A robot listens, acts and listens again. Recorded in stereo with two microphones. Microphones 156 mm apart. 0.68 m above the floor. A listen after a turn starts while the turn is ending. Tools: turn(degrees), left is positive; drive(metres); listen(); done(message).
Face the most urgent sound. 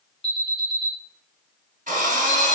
turn(degrees=35)
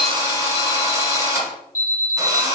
turn(degrees=100)
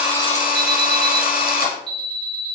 done("Found it: an alarm, straight ahead, 1 to 2 m away.")